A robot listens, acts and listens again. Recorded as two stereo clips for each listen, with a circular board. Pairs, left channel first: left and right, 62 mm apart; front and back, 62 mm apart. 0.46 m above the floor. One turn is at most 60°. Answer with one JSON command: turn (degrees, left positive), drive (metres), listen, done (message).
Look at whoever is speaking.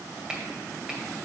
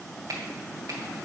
{"listen": true}
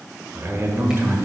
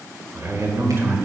{"turn": -60}
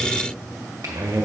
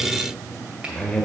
{"turn": -60}
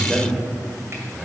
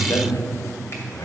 {"turn": -10}
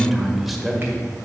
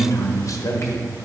{"done": "Facing the man speaking, 1 to 2 m away."}